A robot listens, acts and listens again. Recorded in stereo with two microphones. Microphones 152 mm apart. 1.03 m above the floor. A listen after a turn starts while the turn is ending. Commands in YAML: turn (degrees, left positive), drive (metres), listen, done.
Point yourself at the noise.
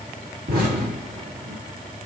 turn: -90
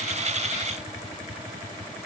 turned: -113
turn: 25
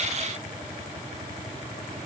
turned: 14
turn: 10
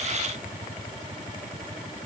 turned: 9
done: "Facing where the explosion came from. I can't hear it now."